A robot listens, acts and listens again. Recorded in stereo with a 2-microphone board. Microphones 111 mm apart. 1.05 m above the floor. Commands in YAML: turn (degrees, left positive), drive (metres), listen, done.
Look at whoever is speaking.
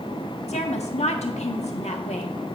turn: 90
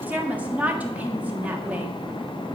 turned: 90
turn: -15
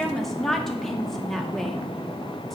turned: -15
done: "Found it: a woman speaking, straight ahead, 1 to 2 m away."